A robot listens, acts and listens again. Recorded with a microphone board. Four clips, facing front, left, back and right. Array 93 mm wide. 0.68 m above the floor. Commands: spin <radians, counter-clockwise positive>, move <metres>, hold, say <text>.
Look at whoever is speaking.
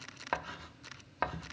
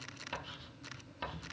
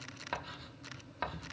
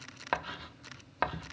hold
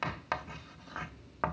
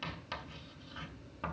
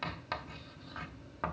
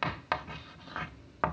hold
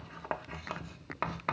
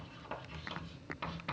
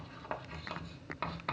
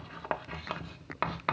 say I can't make out anyone speaking to turn to.